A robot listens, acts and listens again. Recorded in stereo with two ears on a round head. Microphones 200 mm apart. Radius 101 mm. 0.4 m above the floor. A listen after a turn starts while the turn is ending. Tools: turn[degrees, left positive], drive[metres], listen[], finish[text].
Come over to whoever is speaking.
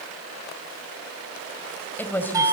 Action: turn[30]
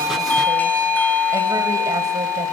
Action: listen[]
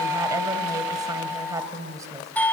Thought: So it is at 20° right.
Action: turn[-20]
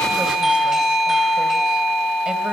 Action: listen[]
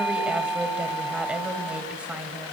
Action: drive[1.0]
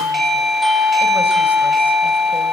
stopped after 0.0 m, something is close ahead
Action: listen[]
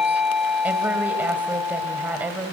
Thought: The woman speaking is now 10° right.
Action: turn[-10]
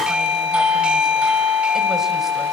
Action: listen[]
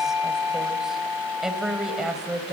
Action: finish[Something is in my way. I am facing the woman speaking but have not reached it.]